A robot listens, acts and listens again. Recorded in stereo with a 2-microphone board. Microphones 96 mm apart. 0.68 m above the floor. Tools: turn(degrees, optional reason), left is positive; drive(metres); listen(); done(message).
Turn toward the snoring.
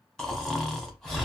turn(degrees=30)
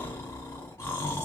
turn(degrees=145, reason="So it is at 145° left.")
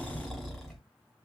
done("Found it: snoring, straight ahead.")